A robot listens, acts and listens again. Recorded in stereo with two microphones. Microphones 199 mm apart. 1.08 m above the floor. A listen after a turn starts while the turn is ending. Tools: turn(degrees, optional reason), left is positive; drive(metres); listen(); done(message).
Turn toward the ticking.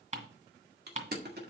turn(degrees=-35, reason="The ticking: about 35° right or 145° right.")
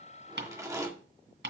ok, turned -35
turn(degrees=-105, reason="So it is at 105° right.")
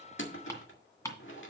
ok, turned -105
turn(degrees=15, reason="The ticking is now 15° left.")
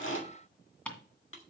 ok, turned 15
done("Found it: ticking, straight ahead, 2 to 4 m away.")